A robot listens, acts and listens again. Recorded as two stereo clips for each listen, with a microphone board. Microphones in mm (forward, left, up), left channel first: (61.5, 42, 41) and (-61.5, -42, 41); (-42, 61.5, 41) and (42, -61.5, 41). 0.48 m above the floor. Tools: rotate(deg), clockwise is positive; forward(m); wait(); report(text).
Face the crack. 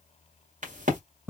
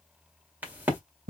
rotate(135)
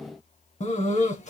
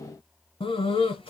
report("I heard a crack from this way, but can't make it out now.")